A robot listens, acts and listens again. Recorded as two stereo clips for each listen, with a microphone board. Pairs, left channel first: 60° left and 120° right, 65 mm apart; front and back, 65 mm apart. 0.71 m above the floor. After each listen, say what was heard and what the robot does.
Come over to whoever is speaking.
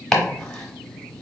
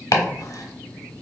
Keep listening.
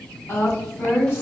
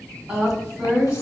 The woman speaking: 115° left. Turn 115° left.
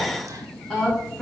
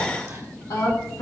The woman speaking is now 15° right. Turn 15° right.
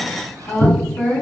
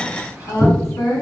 Drive 1.0 m forward.
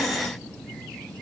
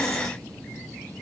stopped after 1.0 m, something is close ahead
Keep listening.
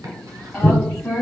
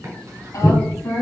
The woman speaking is now 10° left. Turn 10° left.
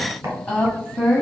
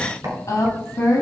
I am next to the woman speaking.